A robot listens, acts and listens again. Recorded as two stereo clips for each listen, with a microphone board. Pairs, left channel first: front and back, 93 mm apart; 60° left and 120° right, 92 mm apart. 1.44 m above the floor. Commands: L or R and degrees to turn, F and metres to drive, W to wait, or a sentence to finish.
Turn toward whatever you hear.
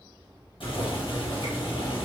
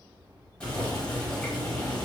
R15
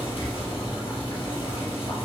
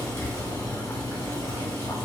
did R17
Facing the boiling.